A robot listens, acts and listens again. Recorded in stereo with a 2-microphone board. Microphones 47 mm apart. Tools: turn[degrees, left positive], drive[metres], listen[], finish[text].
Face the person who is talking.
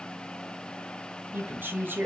Thought: The woman speaking: about 45° right or 135° right.
Action: turn[-45]
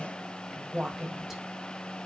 Action: finish[Facing the woman speaking, 2 to 4 m away.]